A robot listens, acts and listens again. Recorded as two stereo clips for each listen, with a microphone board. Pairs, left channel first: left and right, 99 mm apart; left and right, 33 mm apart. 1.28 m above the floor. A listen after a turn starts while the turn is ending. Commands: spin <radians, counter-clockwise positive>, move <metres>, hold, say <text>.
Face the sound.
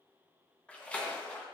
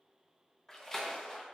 spin 0.52
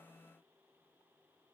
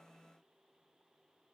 hold
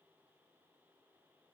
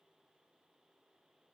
say I heard a splash, but can't make it out now. It was about 15° right or 135° left.